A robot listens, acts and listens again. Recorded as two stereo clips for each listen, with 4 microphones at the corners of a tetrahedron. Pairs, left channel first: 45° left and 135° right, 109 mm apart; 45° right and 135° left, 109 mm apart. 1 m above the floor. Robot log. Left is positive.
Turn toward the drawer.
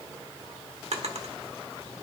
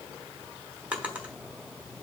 note: The drawer: 145° right.
cmd yaw -145
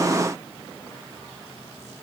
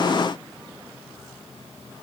cmd idle
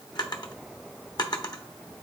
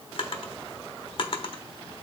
end: Facing the drawer, 1 to 2 m away.